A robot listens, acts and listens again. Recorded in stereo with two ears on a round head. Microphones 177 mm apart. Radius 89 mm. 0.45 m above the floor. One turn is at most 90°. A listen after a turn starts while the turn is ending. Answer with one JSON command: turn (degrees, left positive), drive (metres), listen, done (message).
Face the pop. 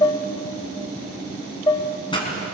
{"turn": 25}
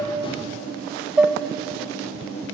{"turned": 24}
{"listen": true}
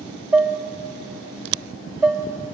{"done": "I heard a pop, but can't make it out now. It was about straight ahead or 130° left."}